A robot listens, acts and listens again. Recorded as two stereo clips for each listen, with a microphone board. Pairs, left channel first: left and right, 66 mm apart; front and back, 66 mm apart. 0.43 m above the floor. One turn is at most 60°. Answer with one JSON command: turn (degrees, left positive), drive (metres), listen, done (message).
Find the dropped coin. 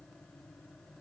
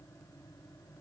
{"listen": true}
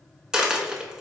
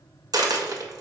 {"turn": -60}
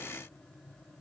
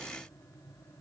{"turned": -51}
{"turn": -60}
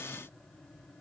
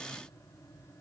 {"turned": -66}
{"turn": -50}
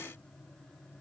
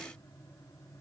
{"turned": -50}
{"done": "Facing where the dropped coin came from. I can't hear it now."}